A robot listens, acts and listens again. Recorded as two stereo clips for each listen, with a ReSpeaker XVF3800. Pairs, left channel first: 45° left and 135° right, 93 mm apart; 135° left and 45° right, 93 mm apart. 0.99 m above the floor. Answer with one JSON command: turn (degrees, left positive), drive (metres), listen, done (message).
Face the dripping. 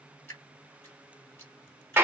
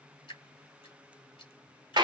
{"turn": 105}
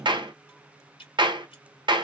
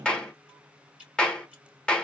{"turn": 30}
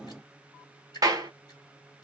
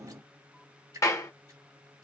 {"done": "Found it: dripping, straight ahead, 1 to 2 m away."}